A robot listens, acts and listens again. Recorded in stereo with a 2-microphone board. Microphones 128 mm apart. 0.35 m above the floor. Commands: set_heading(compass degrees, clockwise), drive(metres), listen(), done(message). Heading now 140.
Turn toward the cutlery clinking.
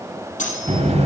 set_heading(50)
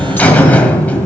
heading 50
listen()
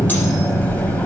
listen()
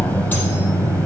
done("Facing where the cutlery clinking came from. I can't hear it now.")